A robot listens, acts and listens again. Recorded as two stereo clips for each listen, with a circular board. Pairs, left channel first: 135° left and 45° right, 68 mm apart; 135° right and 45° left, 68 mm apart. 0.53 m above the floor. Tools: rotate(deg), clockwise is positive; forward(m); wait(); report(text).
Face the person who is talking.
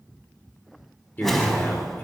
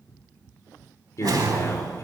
rotate(170)
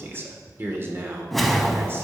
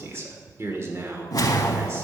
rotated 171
report("Facing the man speaking.")